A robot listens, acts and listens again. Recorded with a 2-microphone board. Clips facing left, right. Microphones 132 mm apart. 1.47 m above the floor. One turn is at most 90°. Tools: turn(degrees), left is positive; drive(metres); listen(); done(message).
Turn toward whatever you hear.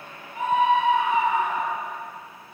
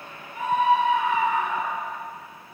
turn(degrees=25)
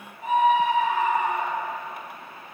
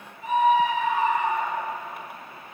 turn(degrees=90)
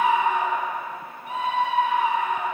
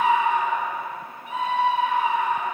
turn(degrees=55)
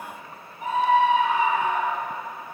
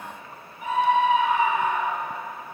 turn(degrees=35)
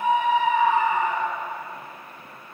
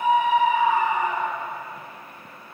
turn(degrees=-15)
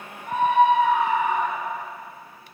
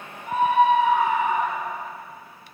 done("Found it: a scream, straight ahead.")